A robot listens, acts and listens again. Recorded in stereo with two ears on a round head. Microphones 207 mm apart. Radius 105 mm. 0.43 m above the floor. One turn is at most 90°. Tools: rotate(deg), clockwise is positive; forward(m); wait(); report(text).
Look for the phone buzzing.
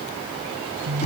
rotate(75)
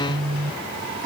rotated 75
rotate(25)
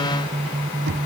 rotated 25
rotate(10)
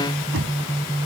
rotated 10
report("Found it: a phone buzzing, straight ahead.")